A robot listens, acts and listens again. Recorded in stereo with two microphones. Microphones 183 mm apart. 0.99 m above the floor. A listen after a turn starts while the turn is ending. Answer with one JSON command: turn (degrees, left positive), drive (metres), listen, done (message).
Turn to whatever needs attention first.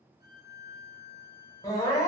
{"turn": 20}
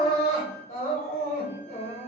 {"turn": 135}
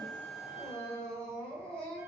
{"done": "Found it: crying, straight ahead."}